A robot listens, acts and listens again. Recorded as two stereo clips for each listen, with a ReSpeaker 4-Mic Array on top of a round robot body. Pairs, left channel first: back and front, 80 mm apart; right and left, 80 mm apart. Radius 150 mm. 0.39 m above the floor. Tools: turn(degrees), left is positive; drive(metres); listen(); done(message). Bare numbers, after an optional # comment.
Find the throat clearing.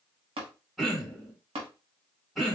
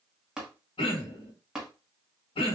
# The throat clearing: 90° right.
turn(-90)
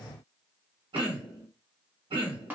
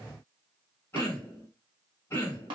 # The throat clearing is now 25° right.
turn(-25)
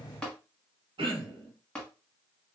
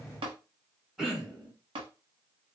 done("Found it: throat clearing, straight ahead, under 1 m away.")